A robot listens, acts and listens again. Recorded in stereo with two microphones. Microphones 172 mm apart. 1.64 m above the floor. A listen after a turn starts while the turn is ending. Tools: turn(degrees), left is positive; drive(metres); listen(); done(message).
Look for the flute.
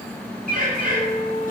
turn(degrees=45)
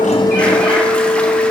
turn(degrees=90)
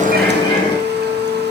turn(degrees=-20)
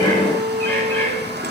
done("Found it: a flute, straight ahead, 1 to 2 m away.")